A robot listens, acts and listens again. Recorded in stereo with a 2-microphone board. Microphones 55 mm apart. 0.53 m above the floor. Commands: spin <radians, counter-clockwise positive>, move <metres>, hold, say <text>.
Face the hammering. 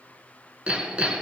spin -0.35
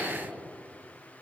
spin -2.44
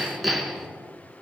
say Found it: hammering, straight ahead, 1 to 2 m away.